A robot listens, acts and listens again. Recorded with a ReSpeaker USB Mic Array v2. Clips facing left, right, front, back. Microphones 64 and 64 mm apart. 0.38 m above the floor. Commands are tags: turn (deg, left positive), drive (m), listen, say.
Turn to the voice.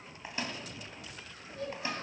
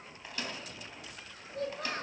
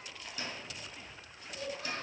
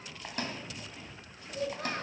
<turn deg="-130"/>
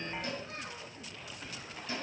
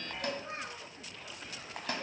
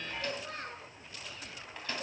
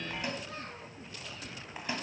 <turn deg="-35"/>
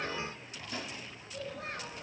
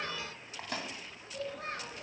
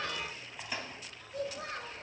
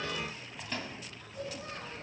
<say>Facing the child speaking, over 4 m away.</say>